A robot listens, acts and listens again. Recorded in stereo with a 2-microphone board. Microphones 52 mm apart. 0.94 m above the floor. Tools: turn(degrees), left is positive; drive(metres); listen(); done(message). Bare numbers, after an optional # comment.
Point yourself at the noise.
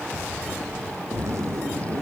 # The zipper: about 70° right or 110° right.
turn(-70)
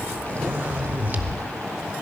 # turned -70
# So it is at 40° right.
turn(-40)
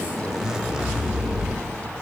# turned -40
# The zipper is now 15° right.
turn(-15)
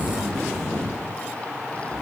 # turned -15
done("Facing the zipper, under 1 m away.")